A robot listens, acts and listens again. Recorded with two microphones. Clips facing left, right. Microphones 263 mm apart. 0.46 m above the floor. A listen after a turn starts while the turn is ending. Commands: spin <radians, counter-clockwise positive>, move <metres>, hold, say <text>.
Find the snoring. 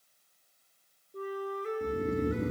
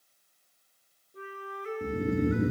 spin -0.52
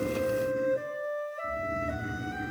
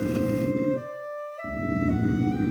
spin -2.27
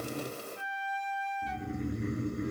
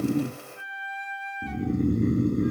spin -0.87
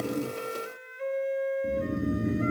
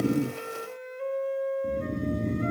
spin 0.17
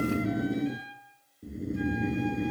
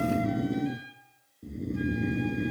say Found it: snoring, straight ahead.